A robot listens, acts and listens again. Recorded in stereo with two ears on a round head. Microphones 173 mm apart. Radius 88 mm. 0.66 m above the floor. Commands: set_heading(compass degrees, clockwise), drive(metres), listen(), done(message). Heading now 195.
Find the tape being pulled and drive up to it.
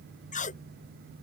set_heading(150)
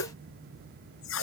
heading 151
set_heading(56)
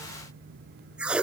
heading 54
drive(1.0)
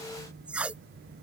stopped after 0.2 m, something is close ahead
done("Something is in my way. I am facing the tape being pulled but have not reached it.")